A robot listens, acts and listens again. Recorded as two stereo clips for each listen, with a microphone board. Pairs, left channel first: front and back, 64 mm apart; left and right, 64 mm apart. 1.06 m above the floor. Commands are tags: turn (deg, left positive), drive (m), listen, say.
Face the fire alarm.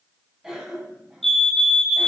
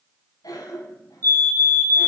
<turn deg="-85"/>
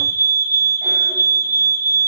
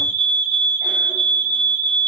<turn deg="20"/>
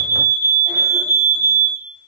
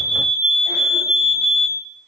<say>Facing the fire alarm.</say>